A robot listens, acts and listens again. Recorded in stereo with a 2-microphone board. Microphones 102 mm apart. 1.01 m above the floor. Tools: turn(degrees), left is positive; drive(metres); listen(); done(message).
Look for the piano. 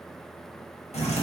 listen()
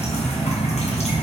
listen()
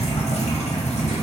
done("I can't make out a piano to turn to.")